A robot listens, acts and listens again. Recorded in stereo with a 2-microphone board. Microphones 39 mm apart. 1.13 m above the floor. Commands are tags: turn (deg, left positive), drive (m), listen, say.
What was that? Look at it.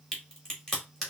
<turn deg="30"/>
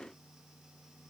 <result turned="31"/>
<listen/>
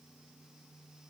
<say>I heard a crack, but can't make it out now. It was about 25° right or 140° left.</say>